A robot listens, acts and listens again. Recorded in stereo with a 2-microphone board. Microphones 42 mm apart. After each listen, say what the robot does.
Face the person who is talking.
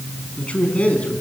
Turn 30° left.
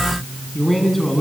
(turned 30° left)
Found it: a man speaking, straight ahead, over 4 m away.